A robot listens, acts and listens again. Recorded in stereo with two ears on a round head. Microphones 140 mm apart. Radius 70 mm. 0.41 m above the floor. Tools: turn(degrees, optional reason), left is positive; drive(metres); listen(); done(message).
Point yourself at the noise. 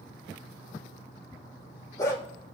turn(degrees=25, reason="The dog barking: about 25° left or 155° left.")
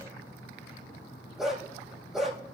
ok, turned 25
done("Found it: a dog barking, straight ahead, over 4 m away.")